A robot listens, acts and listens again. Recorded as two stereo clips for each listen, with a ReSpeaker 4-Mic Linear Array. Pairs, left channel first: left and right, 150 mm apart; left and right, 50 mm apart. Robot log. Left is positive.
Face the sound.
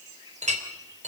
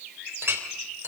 note: The clink: about 50° right or 130° right.
cmd yaw -50
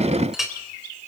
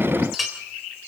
end: Found it: a clink, straight ahead.